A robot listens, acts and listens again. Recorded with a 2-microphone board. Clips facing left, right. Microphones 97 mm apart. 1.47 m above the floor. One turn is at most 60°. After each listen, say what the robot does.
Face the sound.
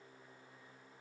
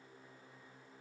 Keep listening.
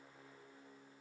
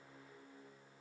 Keep listening.
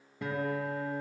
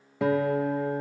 Turn 60° right.
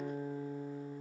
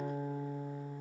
Turn 35° right.
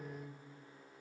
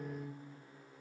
Turn 15° right.
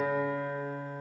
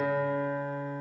Found it: a guitar, straight ahead.